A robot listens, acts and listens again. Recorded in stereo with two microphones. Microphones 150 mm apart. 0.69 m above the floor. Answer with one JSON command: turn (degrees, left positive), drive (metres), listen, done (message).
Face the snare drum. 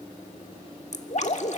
{"listen": true}
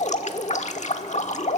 {"listen": true}
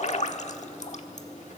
{"done": "I can't make out a snare drum, only dripping."}